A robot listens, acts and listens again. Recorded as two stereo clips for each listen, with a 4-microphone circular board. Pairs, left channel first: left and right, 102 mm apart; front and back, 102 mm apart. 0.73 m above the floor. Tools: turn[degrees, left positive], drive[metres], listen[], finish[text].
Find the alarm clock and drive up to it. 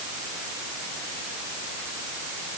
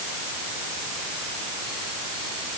Action: listen[]
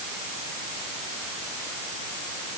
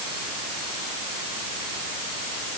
Action: listen[]
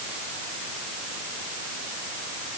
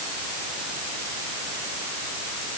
Action: finish[I can't make out an alarm clock to turn to.]